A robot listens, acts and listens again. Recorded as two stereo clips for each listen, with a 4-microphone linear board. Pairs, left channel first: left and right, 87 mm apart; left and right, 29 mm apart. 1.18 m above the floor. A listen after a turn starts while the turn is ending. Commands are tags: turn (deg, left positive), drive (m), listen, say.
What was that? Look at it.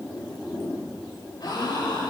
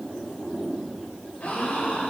<turn deg="55"/>
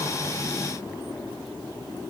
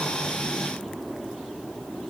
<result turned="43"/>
<listen/>
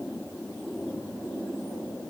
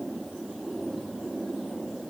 <say>I heard a gasp, but can't make it out now. It was about 15° left or 80° left.</say>